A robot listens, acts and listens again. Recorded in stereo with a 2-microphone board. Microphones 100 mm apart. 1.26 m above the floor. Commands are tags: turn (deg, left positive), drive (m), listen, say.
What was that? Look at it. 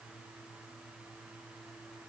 <listen/>
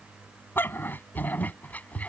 <turn deg="30"/>
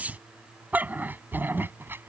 <turn deg="-20"/>
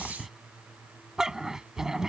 <say>Facing the dog barking.</say>